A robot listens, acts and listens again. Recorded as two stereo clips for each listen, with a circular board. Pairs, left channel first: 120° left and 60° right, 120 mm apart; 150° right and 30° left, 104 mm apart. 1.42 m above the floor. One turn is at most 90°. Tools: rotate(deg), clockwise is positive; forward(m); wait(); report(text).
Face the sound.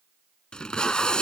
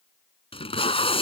rotate(90)
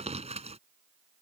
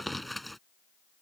rotate(60)
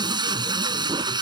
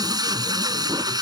rotate(15)
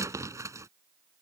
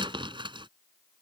report("Found it: tape being pulled, straight ahead.")